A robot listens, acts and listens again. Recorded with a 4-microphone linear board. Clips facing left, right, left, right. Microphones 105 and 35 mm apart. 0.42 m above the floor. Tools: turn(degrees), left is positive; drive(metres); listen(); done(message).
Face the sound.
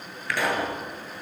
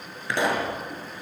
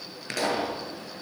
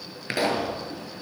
turn(degrees=-25)
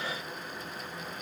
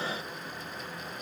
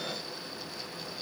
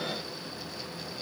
listen()
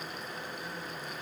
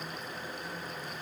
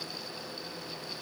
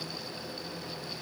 done("I heard a pop, but can't make it out now. It was about straight ahead or 130° right.")